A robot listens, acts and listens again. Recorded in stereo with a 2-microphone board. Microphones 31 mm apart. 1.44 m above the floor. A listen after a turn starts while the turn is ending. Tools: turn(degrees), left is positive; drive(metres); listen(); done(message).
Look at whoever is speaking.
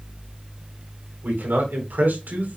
turn(degrees=-90)
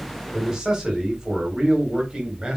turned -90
turn(degrees=-25)
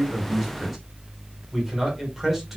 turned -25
done("Facing the man speaking.")